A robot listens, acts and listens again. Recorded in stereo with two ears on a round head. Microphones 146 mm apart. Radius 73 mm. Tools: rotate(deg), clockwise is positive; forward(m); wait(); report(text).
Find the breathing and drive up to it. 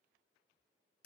wait()
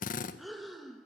rotate(-30)
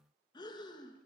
rotate(-155)
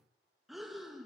forward(1.0)
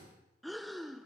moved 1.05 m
forward(1.0)
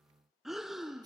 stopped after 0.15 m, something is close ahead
report("Arrived at the breathing, straight ahead.")